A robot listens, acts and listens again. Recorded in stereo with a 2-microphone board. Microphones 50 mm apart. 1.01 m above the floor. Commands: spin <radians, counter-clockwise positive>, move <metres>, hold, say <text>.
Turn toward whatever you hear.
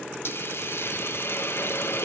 spin 0.96
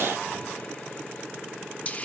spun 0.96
spin 0.70
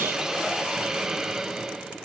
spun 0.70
spin -0.17
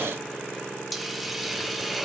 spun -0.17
say Facing the hiss, under 1 m away.